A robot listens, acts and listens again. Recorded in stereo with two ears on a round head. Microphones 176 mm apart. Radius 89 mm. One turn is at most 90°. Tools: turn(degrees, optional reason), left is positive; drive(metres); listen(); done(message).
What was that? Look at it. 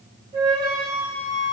turn(degrees=-20, reason="The flute: about 20° right or 160° right.")
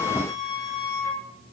done("Found it: a flute, straight ahead.")